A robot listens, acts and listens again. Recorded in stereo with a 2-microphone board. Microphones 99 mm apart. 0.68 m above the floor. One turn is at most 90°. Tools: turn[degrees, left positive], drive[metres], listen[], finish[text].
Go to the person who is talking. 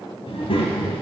Thought: The child speaking: about 75° left or 105° left.
Action: turn[75]
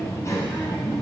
Thought: So it is at 30° left.
Action: turn[30]
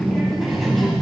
Action: drive[1.0]
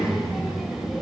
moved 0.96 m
Action: drive[1.0]
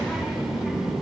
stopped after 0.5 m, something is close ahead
Action: finish[Arrived at the child speaking, straight ahead.]